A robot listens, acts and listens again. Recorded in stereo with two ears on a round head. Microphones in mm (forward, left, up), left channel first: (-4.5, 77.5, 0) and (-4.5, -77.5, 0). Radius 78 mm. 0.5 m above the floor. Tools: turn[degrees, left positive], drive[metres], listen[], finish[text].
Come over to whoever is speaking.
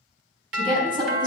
Thought: The woman speaking: about 30° right or 150° right.
Action: turn[-30]
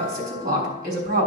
Thought: So it is at 120° right.
Action: turn[-120]
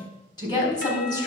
Thought: The woman speaking is now 25° left.
Action: turn[25]
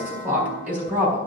Thought: The woman speaking is now 10° right.
Action: turn[-10]
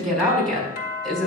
Action: drive[1.0]
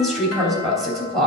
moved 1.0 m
Action: drive[1.0]
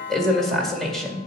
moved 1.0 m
Action: drive[1.0]
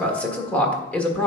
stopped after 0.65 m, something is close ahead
Thought: The woman speaking is now 10° left.
Action: turn[10]
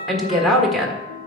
Action: finish[Arrived at the woman speaking, straight ahead.]